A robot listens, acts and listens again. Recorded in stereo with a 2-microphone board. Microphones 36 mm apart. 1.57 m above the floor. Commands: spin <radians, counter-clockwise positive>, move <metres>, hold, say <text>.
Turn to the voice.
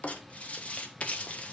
hold
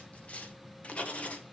hold
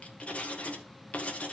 say I can't make out anyone speaking, only writing.